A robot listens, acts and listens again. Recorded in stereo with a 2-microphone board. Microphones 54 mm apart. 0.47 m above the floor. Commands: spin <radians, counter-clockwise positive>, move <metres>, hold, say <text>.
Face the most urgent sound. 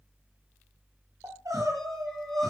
spin -1.57
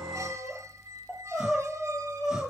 spin -0.17
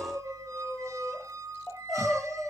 say Found it: crying, straight ahead, 2 to 4 m away.